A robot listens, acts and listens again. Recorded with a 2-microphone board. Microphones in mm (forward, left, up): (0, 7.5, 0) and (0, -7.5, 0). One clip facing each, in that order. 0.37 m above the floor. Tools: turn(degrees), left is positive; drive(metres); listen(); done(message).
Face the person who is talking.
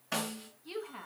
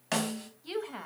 turn(degrees=-60)
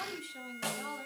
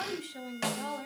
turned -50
turn(degrees=-30)
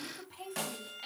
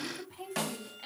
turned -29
done("Facing the woman speaking, 1 to 2 m away.")